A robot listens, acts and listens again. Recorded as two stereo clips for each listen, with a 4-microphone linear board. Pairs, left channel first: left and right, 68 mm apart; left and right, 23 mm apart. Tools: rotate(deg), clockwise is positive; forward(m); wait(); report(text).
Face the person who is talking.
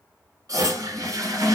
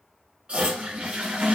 wait()
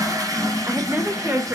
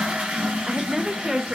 rotate(30)
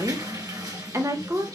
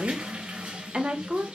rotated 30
rotate(115)
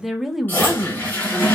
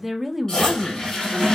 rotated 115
report("Facing the woman speaking, under 1 m away.")